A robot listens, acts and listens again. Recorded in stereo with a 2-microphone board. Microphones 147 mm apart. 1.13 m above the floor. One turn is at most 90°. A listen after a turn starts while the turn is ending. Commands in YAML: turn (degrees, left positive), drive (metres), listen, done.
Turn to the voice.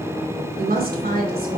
turn: -90
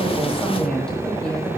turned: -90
turn: 10
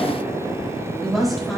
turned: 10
done: "Facing the woman speaking, over 4 m away."